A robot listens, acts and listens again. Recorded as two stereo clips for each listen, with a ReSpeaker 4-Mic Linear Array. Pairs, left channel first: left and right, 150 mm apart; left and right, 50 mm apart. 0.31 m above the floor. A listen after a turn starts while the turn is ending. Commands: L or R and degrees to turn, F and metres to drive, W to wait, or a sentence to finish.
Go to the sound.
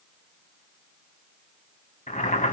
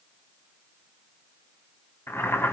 L55
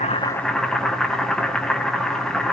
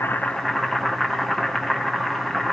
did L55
F1.0
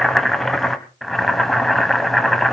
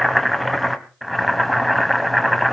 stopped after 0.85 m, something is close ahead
I am next to the boiling.